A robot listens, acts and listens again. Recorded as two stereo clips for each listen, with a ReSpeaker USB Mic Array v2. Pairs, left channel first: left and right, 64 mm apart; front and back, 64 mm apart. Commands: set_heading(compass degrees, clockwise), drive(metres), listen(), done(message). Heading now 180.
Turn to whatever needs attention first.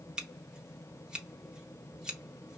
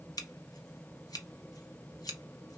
listen()
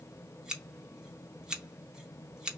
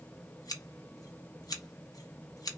listen()
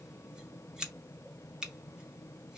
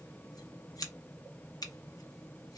done("I can't make out anything urgent to turn to.")